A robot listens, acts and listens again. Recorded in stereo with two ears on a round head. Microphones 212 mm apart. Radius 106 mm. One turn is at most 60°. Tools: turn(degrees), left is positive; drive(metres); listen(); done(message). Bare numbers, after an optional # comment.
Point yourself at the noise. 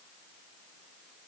listen()
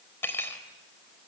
turn(30)
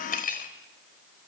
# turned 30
# So it is at 140° left.
turn(60)
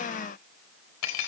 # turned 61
# The cutlery clinking is now 80° left.
turn(60)
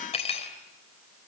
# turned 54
# The cutlery clinking is now 25° left.
turn(25)
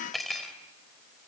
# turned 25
done("Found it: cutlery clinking, straight ahead, 2 to 4 m away.")